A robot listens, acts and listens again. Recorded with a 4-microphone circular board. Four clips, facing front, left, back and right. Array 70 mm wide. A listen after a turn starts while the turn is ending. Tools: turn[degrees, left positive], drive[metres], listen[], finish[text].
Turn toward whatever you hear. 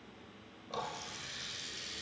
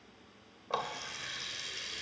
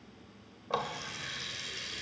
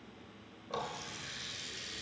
Thought: The running tap: 140° left.
Action: turn[140]
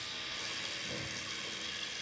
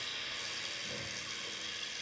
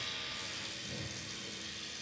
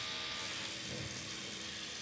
Thought: The running tap is now 35° left.
Action: turn[35]
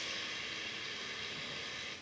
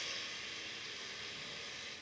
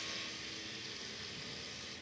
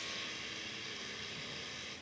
Thought: The running tap is now 10° right.
Action: turn[-10]
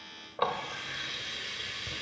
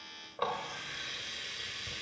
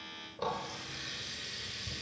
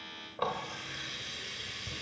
Action: finish[Facing the running tap, under 1 m away.]